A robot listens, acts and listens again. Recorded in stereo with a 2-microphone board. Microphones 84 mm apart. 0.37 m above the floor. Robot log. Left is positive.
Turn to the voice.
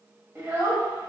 note: The child speaking: about 30° right or 150° right.
cmd yaw -30
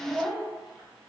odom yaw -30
end: Facing the child speaking.